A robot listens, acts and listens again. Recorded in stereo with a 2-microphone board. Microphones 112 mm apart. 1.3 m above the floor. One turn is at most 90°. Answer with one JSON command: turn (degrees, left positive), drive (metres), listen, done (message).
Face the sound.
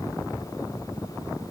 {"listen": true}
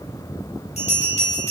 {"turn": 90}
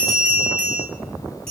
{"done": "Facing the bell, 1 to 2 m away."}